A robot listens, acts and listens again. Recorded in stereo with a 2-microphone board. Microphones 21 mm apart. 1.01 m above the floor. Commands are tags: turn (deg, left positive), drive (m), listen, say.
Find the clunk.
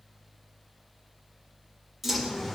<turn deg="-30"/>
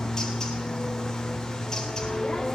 <listen/>
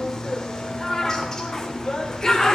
<say>I heard a clunk, but can't make it out now. It was about 20° left or 140° right.</say>